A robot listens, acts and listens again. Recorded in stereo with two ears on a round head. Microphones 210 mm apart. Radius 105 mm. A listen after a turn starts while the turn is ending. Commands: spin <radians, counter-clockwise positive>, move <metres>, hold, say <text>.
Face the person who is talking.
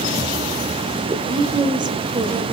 spin -0.35
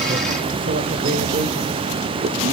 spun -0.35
hold
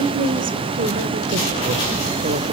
spin -2.44
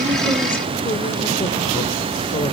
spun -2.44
hold
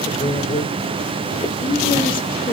spin 0.44
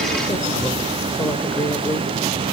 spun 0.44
spin 0.26
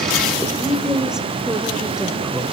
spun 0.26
say Found it: a woman speaking, straight ahead, 1 to 2 m away.